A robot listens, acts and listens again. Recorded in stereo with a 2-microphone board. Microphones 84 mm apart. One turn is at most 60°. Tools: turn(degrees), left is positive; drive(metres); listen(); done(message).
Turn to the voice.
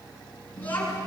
turn(degrees=20)
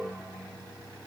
listen()
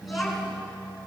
done("Facing the child speaking, over 4 m away.")